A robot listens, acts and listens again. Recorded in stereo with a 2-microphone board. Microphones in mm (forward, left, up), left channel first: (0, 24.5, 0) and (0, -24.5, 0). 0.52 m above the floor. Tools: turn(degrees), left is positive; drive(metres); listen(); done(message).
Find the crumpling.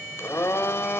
listen()
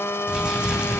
turn(degrees=-20)
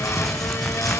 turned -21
done("Facing the crumpling.")